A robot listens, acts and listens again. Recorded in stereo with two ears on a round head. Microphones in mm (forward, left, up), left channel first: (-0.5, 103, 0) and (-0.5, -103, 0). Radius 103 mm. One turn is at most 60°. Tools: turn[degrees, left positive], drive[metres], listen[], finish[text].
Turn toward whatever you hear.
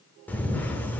Action: turn[30]
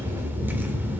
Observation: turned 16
Thought: So it is at 10° right.
Action: turn[-10]
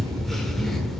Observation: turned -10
Action: finish[Facing the camera shutter.]